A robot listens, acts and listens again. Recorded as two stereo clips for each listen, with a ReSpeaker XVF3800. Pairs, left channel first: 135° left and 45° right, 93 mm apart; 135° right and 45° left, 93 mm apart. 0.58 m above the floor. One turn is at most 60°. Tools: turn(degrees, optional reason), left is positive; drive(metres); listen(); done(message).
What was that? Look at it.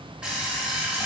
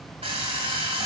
turn(degrees=35, reason="The alarm clock: 35° left.")
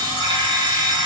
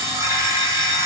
turn(degrees=-15, reason="The alarm clock is now 15° right.")
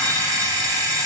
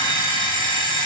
done("Facing the alarm clock, 2 to 4 m away.")